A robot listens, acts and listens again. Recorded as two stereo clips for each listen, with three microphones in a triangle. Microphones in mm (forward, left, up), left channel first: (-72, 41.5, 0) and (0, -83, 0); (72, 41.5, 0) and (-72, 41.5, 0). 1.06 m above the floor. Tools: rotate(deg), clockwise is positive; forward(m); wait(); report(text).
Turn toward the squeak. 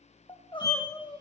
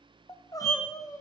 rotate(65)
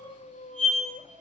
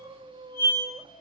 report("Facing the squeak, 2 to 4 m away.")